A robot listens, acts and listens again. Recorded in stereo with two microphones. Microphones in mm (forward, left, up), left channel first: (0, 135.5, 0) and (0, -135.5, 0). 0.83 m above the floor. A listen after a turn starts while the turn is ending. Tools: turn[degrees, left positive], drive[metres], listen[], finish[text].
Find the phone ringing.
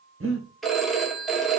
Action: turn[30]
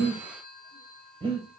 Thought: So it is at 145° left.
Action: turn[145]
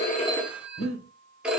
Action: finish[Facing the phone ringing, 1 to 2 m away.]